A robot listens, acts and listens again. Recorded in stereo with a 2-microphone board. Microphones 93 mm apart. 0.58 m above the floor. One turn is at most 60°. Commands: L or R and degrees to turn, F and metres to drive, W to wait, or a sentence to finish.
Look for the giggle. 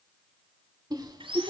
R45
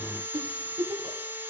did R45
R60
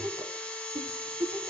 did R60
R50
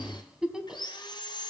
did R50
Facing the giggle.